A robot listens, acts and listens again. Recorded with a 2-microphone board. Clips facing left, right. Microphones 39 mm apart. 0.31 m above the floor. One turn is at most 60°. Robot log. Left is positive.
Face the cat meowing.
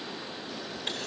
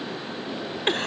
cmd idle
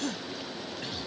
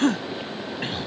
cmd idle
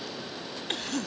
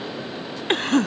end: I can't make out a cat meowing to turn to.